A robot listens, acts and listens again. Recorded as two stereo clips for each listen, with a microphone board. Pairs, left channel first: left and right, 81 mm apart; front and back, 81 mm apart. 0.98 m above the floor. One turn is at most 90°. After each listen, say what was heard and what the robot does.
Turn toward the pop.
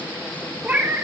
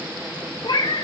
Keep listening.
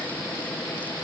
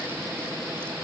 Keep listening.
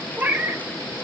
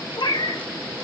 I can't make out a pop, only a cat meowing.